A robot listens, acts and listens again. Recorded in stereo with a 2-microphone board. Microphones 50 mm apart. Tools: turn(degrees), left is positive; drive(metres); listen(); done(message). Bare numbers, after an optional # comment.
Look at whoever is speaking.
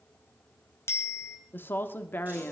# The woman speaking: about 50° left or 130° left.
turn(50)
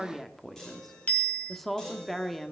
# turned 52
done("Facing the woman speaking, 1 to 2 m away.")